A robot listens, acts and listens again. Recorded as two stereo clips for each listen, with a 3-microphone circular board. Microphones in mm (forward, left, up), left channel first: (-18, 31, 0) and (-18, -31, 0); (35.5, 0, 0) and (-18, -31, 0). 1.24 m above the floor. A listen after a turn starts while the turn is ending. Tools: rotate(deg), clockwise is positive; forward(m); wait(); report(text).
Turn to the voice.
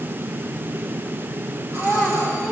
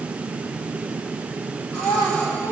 rotate(-15)
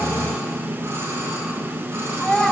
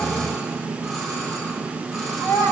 report("Found it: a child speaking, straight ahead, over 4 m away.")